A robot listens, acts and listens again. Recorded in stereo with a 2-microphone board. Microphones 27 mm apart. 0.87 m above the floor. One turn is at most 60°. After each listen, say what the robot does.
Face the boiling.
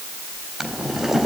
Turn 30° right.
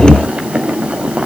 Turn 60° right.
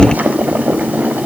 Turn 60° right.
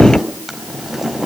Turn 10° right.
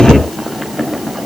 Facing the boiling.